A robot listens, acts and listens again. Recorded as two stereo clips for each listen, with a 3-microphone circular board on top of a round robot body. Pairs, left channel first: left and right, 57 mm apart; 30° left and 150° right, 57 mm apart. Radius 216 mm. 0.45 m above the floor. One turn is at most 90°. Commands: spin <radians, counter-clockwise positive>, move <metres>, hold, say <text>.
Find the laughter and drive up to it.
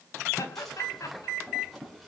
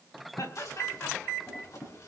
spin 1.13
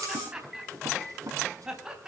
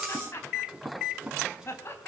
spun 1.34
spin -0.17
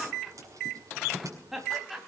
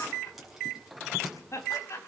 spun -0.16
move 1.0
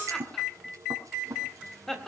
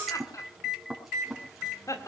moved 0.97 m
move 1.0
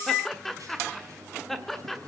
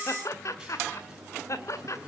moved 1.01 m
move 1.0
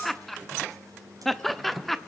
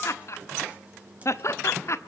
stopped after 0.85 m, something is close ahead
say I am next to the laughter.